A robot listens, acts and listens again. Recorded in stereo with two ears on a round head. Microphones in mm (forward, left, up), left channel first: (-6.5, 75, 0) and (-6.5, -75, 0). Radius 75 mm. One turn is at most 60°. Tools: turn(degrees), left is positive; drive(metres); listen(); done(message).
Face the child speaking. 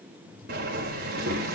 turn(degrees=-60)
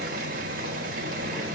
listen()
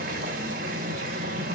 listen()
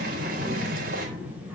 turn(degrees=-10)
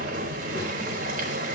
listen()
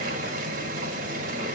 listen()
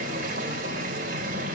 done("I heard a child speaking from this way, but can't make it out now.")